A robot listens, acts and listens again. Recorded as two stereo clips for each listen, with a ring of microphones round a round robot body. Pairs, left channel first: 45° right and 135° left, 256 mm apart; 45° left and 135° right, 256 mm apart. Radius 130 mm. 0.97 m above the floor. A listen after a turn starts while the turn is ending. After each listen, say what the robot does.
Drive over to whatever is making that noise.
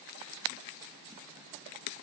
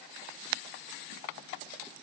Keep listening.
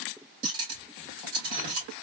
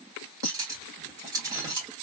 Turn 150° left.
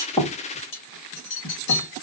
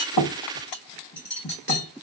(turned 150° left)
Drive 1.0 m forward.
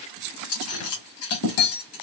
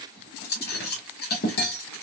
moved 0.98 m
Turn 10° right.
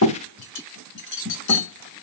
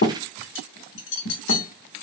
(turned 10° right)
Drive 1.0 m forward.
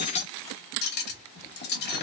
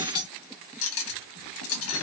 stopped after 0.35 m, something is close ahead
Turn 10° left.
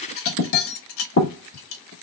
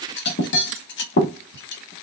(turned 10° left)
Arrived at the cutlery clinking, straight ahead.